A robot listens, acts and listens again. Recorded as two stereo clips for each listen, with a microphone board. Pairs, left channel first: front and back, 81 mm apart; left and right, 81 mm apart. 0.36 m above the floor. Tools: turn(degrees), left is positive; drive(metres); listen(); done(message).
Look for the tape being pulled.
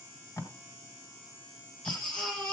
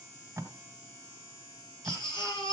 turn(degrees=-35)
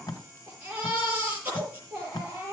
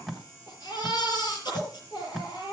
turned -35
done("Found it: tape being pulled, straight ahead.")